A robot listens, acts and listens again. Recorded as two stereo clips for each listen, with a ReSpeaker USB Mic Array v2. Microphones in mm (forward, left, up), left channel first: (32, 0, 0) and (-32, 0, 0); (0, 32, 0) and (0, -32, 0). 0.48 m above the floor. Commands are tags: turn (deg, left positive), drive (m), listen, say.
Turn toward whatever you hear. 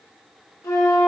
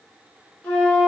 <turn deg="25"/>
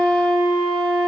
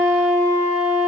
<say>Found it: a flute, straight ahead.</say>